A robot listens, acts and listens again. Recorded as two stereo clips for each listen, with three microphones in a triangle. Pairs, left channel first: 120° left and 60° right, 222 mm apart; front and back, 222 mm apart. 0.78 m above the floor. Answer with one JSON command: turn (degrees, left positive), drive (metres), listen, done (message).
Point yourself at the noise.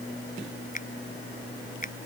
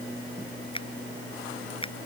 {"turn": 65}
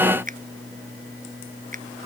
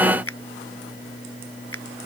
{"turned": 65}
{"done": "Found it: a finger snap, straight ahead."}